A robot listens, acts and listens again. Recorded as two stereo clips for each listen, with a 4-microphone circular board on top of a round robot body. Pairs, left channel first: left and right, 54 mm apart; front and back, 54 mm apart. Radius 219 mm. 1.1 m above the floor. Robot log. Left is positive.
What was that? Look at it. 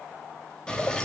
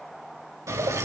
note: The dripping: 165° left.
cmd yaw +165
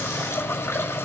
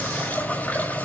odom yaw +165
note: The dripping is now 55° left.
cmd yaw +55
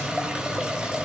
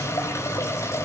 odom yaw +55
note: The dripping is now 15° right.
cmd yaw -15
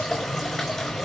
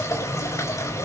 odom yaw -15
end: Facing the dripping.